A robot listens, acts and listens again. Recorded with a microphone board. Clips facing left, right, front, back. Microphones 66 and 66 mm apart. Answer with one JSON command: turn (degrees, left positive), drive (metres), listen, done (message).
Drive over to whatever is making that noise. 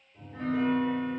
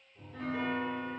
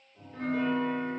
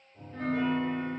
{"turn": 125}
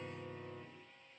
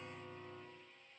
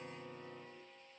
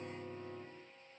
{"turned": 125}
{"turn": 15}
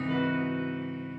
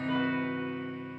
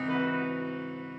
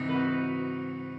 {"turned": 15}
{"turn": 10}
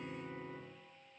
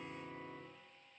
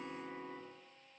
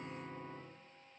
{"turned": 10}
{"drive": 1.0}
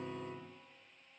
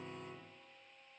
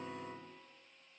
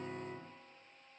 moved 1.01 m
{"drive": 1.0}
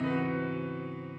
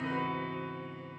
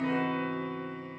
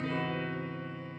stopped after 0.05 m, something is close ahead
{"done": "Arrived at the piano, straight ahead."}